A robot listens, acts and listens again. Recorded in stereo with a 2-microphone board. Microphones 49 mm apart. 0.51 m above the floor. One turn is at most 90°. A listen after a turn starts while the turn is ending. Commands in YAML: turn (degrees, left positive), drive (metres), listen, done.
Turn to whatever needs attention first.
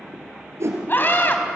turn: 45
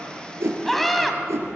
done: "Found it: a scream, straight ahead."